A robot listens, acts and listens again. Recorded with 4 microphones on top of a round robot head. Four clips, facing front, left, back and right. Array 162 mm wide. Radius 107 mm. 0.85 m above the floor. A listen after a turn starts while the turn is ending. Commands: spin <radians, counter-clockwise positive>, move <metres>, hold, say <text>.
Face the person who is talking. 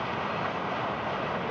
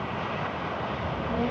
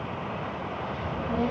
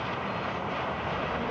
spin 2.53
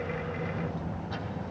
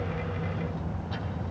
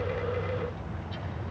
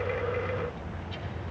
spin 0.52
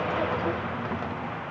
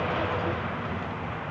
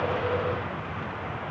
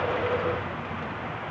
hold
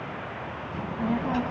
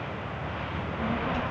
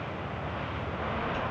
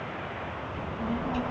say Found it: a child speaking, straight ahead.